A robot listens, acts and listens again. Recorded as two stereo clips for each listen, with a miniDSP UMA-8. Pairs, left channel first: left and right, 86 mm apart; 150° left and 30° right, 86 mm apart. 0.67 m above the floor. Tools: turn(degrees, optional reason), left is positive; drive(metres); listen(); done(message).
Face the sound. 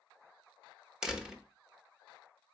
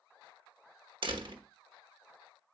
turn(degrees=-10, reason="The door slam: 10° right.")
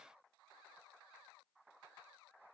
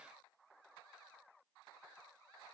done("Facing where the door slam came from. I can't hear it now.")